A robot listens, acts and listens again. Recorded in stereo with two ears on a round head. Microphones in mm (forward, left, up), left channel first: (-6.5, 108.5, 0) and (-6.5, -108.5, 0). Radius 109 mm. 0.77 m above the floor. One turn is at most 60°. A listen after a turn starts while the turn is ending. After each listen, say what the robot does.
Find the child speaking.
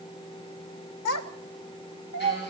Turn 60° left.
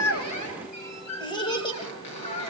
Turn 25° left.
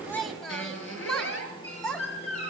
Found it: a child speaking, straight ahead, 2 to 4 m away.